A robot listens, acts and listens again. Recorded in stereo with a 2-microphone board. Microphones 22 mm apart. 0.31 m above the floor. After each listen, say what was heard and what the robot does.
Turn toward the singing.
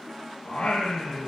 The singing: about 75° left or 105° left. Turn 75° left.
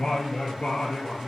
So it is at 45° left. Turn 45° left.
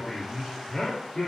The singing is now 15° left. Turn 15° left.
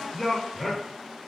The singing is now 10° left. Turn 10° left.
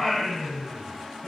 The singing is now 10° left. Turn 10° left.
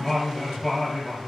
Found it: singing, straight ahead, 2 to 4 m away.